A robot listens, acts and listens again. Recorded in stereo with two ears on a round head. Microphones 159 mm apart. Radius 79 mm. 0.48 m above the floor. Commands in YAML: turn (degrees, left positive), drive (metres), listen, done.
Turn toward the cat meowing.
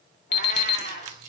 turn: 60
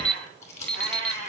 turn: 60
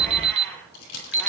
turn: 15
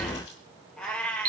done: "Facing the cat meowing."